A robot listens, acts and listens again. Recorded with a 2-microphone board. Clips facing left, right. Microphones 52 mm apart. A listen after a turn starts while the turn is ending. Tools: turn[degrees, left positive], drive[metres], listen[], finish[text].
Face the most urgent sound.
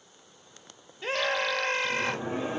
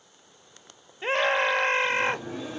Thought: The scream: about 30° right or 150° right.
Action: turn[-30]
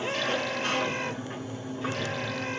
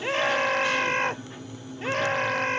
Thought: So it is at 120° right.
Action: turn[-120]
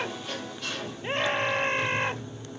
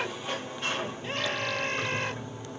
Thought: The scream is now 30° left.
Action: turn[30]
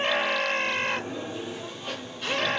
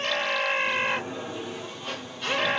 Thought: The scream is now 10° right.
Action: turn[-10]
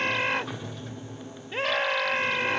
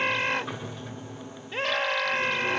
Action: finish[Facing the scream.]